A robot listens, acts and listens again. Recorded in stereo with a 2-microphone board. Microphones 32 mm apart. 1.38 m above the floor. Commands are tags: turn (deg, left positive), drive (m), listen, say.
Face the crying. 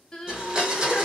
<turn deg="20"/>
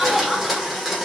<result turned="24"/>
<listen/>
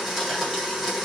<listen/>
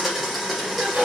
<say>I heard crying, but can't make it out now. It was about 5° right or 140° left.</say>